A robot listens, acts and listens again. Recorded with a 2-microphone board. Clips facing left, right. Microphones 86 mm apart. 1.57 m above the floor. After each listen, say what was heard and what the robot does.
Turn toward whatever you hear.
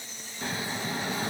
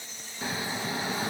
Turn 30° right.
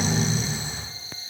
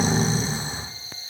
So it is at 140° right. Turn 140° right.
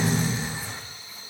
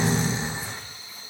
The snoring is now 25° right. Turn 25° right.
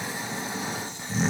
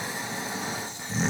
Found it: snoring, straight ahead.